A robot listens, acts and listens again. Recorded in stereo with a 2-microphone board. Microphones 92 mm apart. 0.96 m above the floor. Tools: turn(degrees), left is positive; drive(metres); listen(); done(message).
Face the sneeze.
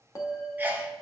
turn(degrees=-20)
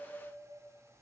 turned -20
listen()
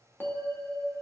done("I heard a sneeze, but can't make it out now. It was about straight ahead or 140° right.")